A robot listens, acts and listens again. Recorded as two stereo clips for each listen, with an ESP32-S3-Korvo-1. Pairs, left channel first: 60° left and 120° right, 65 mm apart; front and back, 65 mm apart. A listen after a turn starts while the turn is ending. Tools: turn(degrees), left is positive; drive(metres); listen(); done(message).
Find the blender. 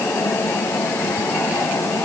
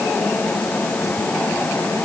listen()
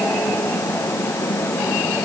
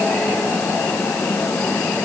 listen()
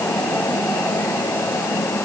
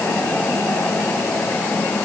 done("I can't make out a blender to turn to.")